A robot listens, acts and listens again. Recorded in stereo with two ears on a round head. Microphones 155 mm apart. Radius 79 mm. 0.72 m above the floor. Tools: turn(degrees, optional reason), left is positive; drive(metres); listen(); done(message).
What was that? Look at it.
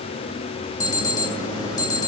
turn(degrees=20, reason="The alarm: about 20° left or 160° left.")
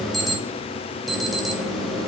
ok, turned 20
done("Found it: an alarm, straight ahead, 1 to 2 m away.")